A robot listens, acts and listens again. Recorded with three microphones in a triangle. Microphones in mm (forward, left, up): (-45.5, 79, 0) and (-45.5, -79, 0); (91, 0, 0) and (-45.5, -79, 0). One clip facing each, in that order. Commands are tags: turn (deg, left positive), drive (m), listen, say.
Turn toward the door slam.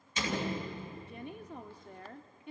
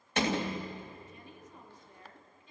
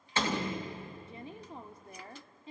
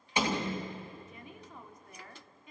<turn deg="-75"/>
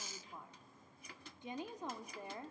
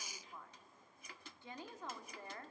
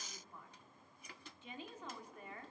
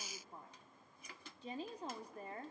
<say>Facing where the door slam came from. I can't hear it now.</say>